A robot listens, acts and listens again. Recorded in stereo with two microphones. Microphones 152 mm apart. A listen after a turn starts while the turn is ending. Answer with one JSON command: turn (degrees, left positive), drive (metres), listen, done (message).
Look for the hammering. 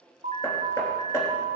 {"turn": 20}
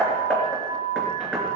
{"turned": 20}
{"done": "Facing the hammering."}